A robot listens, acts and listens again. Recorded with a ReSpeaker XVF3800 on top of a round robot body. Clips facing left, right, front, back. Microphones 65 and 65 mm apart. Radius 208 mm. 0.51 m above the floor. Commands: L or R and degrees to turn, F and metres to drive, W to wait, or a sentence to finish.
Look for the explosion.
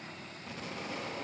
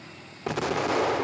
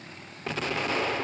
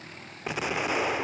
R100
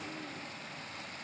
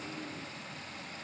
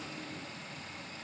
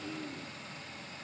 Facing where the explosion came from. I can't hear it now.